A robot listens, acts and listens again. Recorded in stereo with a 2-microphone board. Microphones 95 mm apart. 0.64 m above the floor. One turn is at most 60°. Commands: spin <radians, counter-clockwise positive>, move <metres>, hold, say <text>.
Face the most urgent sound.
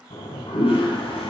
hold
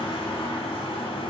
hold
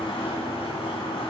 say I can't make out anything urgent to turn to.